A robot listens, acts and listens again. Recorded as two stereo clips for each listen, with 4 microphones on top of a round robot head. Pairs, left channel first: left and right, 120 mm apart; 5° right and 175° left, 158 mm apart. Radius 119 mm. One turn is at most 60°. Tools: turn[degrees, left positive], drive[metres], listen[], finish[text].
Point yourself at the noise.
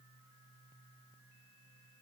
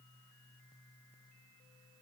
Action: listen[]
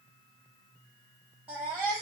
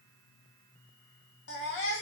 Action: finish[Found it: a baby crying, straight ahead.]